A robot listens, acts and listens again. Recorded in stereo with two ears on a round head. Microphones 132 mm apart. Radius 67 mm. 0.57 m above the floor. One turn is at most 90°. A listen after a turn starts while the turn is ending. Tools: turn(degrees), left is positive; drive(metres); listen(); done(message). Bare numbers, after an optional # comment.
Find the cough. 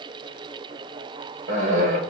# The cough: about 55° right or 125° right.
turn(-55)
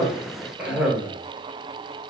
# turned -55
# So it is at 10° right.
turn(-10)
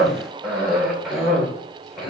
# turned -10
done("Found it: a cough, straight ahead.")